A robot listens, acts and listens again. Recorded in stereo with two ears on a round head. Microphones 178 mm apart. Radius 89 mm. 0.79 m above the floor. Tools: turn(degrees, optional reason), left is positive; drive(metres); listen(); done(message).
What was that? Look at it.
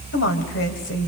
turn(degrees=60, reason="The woman speaking: about 60° left or 120° left.")
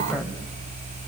done("Facing the woman speaking.")